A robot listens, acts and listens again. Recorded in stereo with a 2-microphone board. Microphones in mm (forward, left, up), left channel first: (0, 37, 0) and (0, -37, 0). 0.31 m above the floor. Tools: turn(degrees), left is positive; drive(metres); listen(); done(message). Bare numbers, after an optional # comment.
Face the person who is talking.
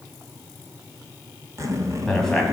turn(30)
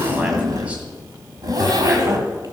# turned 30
listen()
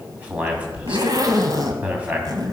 # So it is at 20° right.
turn(-20)
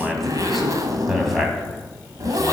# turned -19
done("Facing the man speaking, 2 to 4 m away.")